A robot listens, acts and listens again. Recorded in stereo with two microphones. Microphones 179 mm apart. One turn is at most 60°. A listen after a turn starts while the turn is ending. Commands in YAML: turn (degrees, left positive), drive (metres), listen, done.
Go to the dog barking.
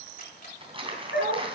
turn: 60
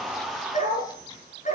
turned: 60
turn: 45
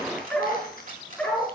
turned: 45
drive: 1.0
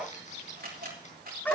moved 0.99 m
turn: 10
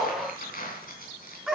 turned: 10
drive: 1.0
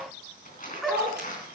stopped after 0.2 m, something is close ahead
done: "Something is in my way. I am facing the dog barking but have not reached it."